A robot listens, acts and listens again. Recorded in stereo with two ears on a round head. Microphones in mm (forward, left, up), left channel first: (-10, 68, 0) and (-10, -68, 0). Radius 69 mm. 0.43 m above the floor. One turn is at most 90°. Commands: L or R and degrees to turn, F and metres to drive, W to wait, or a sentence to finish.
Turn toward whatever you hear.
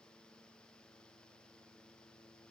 W
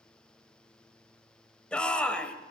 L30
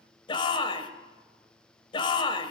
L90
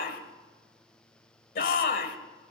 L80
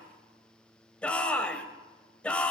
L10
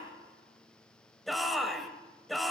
Facing the shout.